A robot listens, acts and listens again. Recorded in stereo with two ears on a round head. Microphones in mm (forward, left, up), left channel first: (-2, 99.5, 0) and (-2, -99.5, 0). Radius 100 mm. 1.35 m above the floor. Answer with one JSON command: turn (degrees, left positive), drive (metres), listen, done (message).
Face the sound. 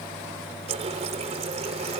{"turn": -30}
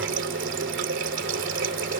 {"turn": -120}
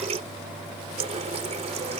{"turn": -30}
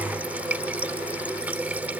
{"turn": -10}
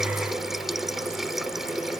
{"done": "Found it: a running tap, straight ahead."}